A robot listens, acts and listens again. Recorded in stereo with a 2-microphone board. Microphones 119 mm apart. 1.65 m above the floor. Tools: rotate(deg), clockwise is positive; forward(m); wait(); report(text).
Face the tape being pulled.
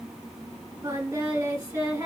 wait()
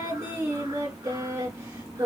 wait()
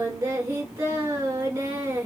report("I can't make out tape being pulled to turn to.")